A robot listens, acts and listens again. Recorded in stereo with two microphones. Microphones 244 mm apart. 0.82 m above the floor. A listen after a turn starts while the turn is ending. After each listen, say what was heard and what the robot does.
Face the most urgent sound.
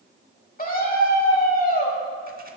The scream: about 35° left or 145° left. Turn 35° left.
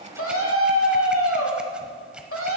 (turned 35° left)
So it is at 100° left. Turn 100° left.
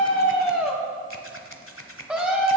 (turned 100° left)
Found it: a scream, straight ahead.